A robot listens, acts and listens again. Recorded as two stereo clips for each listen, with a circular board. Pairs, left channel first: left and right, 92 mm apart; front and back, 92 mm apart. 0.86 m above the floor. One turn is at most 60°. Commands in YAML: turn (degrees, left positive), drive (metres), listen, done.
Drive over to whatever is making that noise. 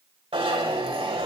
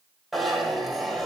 turn: -60
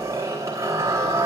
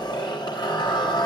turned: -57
turn: -35
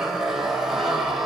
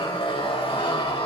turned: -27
drive: 1.0
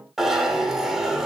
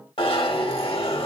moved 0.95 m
drive: 1.0
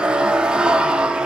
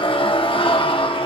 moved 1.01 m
turn: -10
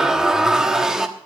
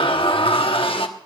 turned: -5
drive: 1.0
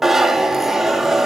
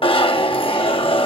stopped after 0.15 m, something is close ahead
done: "Arrived at the zipper, straight ahead."